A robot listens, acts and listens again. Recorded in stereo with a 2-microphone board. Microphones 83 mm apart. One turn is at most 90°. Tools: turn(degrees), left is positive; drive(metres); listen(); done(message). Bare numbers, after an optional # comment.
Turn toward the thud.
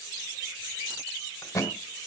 # The thud: about 40° left or 140° left.
turn(40)
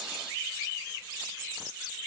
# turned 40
listen()
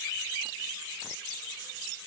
done("I heard a thud, but can't make it out now. It was about straight ahead or 100° left.")